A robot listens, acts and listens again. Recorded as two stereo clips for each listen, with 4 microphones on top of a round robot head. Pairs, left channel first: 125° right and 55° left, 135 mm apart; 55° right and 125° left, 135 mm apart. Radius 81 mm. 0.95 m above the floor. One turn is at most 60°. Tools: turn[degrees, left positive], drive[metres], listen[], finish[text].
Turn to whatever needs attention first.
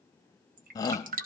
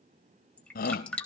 Thought: The shout: 60° right.
Action: turn[-60]
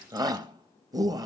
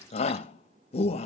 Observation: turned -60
Thought: The shout is now 10° right.
Action: turn[-10]
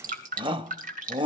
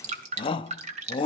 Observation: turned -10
Action: finish[Found it: a shout, straight ahead.]